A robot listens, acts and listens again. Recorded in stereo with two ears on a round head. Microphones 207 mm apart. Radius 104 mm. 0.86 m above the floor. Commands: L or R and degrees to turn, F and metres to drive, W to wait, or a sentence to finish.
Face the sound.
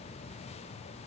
W
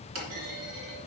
R70
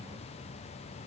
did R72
W
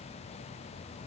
I heard a clunk, but can't make it out now. It was about 5° left or 40° right.